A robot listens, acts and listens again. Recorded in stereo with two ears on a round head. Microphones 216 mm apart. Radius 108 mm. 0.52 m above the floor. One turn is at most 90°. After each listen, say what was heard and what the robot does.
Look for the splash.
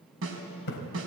The splash: about 50° left or 130° left. Turn 50° left.
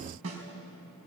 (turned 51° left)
Keep listening.
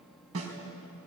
I heard a splash, but can't make it out now. It was about straight ahead or 80° left.